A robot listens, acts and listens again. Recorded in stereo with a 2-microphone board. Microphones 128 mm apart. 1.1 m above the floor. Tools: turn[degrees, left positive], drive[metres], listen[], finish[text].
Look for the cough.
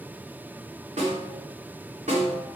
Action: listen[]
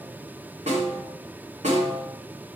Action: listen[]
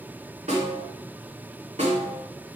Action: finish[I can't make out a cough, only a snare drum.]